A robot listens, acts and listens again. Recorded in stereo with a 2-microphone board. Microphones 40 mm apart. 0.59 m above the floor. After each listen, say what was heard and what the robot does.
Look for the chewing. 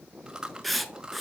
Turn 30° right.
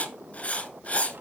Keep listening.
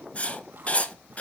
Keep listening.
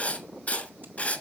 I heard chewing, but can't make it out now. It was about 15° left or 135° right.